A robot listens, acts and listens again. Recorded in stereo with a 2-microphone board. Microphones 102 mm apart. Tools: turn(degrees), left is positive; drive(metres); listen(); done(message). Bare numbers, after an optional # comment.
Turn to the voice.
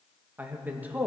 # The man speaking: about 15° right or 165° right.
turn(-15)
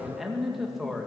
done("Found it: a man speaking, straight ahead.")